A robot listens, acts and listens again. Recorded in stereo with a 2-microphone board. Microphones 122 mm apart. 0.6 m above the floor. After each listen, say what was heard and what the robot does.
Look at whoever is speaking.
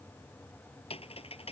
Keep listening.
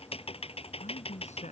The man speaking: about 65° left or 115° left. Turn 65° left.
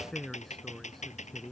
Facing the man speaking.